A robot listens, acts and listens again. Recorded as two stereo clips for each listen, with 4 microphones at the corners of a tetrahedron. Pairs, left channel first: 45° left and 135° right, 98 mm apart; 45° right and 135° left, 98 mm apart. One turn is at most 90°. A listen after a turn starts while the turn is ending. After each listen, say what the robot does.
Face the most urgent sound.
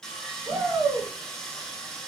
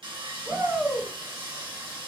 Turn 90° right.
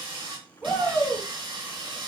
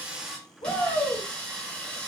Turn 60° right.
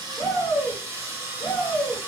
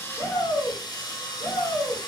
Turn 15° right.
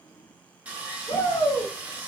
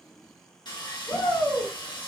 Found it: a shout, straight ahead, 1 to 2 m away.